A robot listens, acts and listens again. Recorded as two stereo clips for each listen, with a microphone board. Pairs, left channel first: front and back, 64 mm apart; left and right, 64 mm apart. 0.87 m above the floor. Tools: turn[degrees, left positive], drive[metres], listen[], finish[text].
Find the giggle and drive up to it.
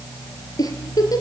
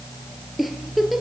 Action: drive[1.0]
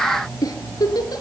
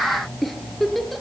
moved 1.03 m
Action: drive[1.0]
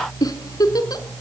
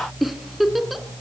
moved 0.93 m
Action: drive[1.0]
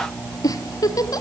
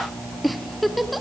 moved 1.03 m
Action: drive[1.0]
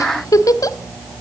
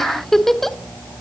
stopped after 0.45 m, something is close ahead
Action: finish[Arrived at the giggle, straight ahead.]